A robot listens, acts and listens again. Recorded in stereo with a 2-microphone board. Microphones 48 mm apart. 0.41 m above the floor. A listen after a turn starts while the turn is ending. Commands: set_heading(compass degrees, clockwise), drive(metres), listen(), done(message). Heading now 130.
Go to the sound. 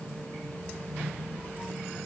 listen()
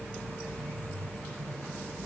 listen()
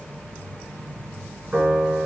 set_heading(150)
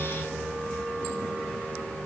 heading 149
drive(1.0)
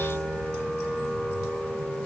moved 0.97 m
drive(1.0)
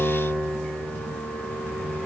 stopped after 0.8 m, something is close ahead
done("I am next to the piano.")